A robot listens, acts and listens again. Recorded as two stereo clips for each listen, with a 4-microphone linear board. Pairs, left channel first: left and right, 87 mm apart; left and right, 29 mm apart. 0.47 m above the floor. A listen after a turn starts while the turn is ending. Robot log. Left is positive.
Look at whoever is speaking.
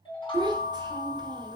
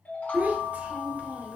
note: The child speaking: about 60° right or 120° right.
cmd yaw -60
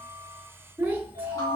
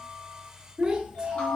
note: So it is at 30° right.
cmd yaw -30
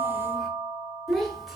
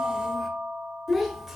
end: Found it: a child speaking, straight ahead, 1 to 2 m away.